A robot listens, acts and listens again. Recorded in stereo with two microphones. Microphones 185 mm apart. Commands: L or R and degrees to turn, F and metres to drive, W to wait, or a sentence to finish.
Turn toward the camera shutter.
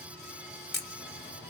L55
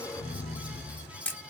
Facing the camera shutter, under 1 m away.